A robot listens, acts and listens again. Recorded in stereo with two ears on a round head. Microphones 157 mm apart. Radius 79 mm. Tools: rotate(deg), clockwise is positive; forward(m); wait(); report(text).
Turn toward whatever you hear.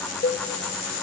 rotate(-55)
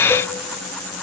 wait()
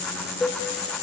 rotate(-10)
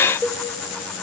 report("Found it: a cowbell, straight ahead, 1 to 2 m away.")